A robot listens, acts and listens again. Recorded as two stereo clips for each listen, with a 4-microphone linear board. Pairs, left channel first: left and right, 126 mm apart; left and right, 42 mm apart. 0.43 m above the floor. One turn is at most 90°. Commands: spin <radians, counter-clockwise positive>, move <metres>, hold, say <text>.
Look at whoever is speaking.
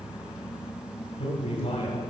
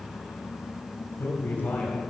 spin 0.87
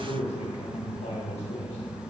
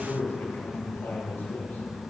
spin 1.31
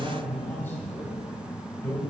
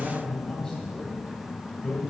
spin 0.35
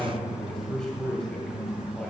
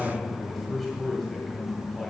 say Found it: a man speaking, straight ahead.